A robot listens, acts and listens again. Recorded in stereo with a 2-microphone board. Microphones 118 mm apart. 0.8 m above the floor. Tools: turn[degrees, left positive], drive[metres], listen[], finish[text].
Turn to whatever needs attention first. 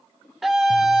Action: turn[-30]
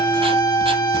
Thought: So it is at 30° left.
Action: turn[30]
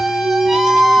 Action: finish[Facing the scream.]